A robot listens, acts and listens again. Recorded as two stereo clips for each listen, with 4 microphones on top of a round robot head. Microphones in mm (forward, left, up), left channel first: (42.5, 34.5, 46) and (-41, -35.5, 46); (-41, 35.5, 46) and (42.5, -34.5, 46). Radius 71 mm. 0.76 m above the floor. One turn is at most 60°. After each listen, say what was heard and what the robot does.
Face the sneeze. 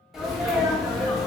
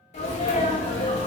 The sneeze: 135° left. Turn 60° left.
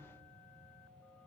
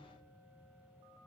Nothing new. It was at 75° left. Turn 60° left.
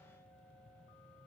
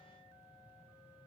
Nothing new. It was at 15° left. Turn 15° left.
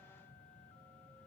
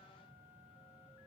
I heard a sneeze from this way, but can't make it out now.